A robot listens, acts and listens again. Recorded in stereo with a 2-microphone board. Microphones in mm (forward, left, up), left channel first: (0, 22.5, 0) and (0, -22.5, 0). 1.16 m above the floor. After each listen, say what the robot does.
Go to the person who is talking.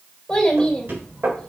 Turn 15° left.
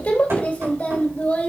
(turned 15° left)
Turn 150° left.
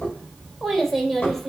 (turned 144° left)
Drive 1.0 m forward.
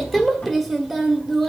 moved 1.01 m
Drive 1.0 m forward.
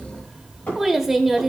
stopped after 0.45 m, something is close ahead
Arrived at the child speaking, straight ahead.